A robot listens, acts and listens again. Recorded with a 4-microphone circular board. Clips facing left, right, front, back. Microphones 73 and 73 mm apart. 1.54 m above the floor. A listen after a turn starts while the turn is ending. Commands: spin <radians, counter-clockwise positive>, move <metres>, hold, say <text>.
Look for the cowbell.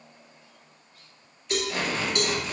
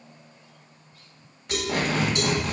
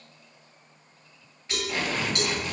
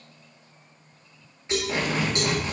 spin 2.09
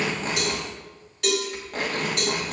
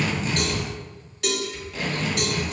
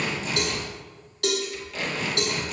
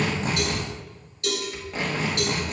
say Facing the cowbell, 2 to 4 m away.